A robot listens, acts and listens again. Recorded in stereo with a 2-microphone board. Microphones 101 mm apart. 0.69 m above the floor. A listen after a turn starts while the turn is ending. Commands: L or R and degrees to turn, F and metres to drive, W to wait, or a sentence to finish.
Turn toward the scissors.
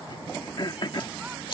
L55
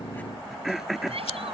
L70
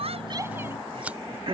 R15
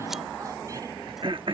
W
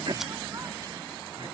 W
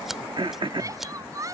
Found it: scissors, straight ahead.